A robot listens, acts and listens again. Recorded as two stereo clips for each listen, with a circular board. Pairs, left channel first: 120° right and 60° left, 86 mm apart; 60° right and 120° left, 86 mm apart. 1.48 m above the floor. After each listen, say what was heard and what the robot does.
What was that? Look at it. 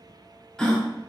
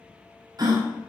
The gasp: 160° left. Turn 160° left.
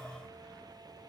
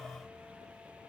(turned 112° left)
Nothing new. It was at 50° left. Turn 50° left.
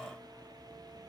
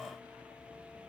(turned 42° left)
I heard a gasp from this way, but can't make it out now.